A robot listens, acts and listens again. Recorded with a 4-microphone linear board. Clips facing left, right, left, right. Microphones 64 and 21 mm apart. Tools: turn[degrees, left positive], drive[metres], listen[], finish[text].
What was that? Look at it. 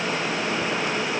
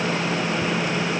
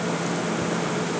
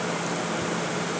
Action: listen[]
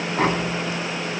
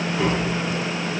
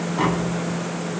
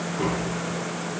Thought: The tapping: about 50° left or 130° left.
Action: turn[50]
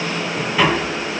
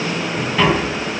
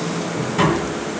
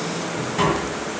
Action: finish[Found it: tapping, straight ahead.]